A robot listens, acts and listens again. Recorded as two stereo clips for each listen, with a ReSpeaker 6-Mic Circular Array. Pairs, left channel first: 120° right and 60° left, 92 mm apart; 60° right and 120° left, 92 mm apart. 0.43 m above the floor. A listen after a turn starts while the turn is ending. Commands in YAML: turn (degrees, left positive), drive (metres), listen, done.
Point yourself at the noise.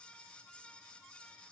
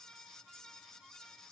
listen: true
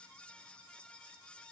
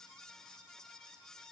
listen: true
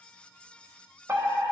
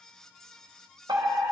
turn: 115
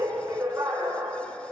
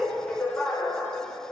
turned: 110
done: "Found it: a fire alarm, straight ahead, 2 to 4 m away."